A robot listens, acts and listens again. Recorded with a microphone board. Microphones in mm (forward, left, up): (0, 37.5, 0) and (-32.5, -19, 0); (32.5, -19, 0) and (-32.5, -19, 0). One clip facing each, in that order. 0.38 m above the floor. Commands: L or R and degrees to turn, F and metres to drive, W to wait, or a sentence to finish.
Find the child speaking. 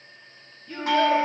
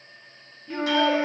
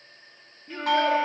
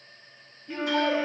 R50
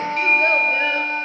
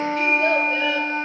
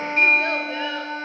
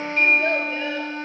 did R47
W
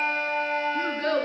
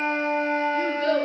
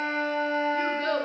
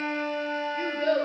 L15
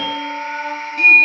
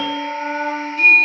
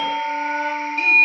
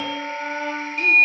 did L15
W
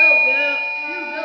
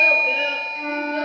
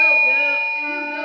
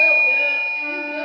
Facing the child speaking.